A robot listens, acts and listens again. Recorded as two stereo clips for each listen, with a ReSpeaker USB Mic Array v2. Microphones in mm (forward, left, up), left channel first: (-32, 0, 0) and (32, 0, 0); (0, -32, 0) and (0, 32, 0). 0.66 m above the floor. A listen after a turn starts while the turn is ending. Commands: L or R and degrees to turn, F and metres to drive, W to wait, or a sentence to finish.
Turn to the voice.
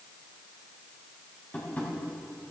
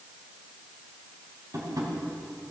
W
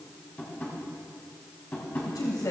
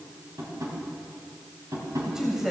L175
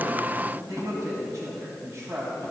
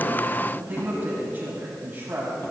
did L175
L30
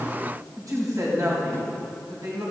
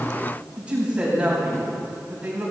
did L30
L20
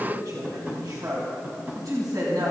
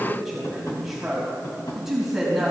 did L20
Facing the woman speaking, 2 to 4 m away.